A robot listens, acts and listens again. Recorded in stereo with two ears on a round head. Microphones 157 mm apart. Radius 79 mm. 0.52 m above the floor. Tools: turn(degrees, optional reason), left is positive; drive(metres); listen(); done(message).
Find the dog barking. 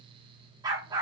turn(degrees=-20, reason="The dog barking: about 20° right or 160° right.")
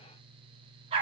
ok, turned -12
turn(degrees=-145, reason="So it is at 145° right.")
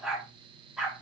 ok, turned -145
done("Facing the dog barking.")